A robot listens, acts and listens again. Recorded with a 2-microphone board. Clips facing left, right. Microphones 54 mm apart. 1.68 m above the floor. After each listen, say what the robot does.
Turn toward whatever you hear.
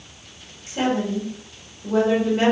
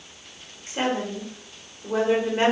Turn 30° right.
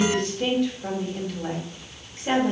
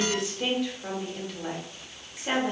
Found it: a woman speaking, straight ahead, 1 to 2 m away.